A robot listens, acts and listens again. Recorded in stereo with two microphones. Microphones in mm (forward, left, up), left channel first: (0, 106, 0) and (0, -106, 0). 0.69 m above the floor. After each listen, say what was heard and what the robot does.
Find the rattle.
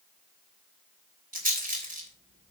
The rattle: about 40° right or 140° right. Turn 40° right.
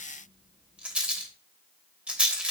Facing the rattle.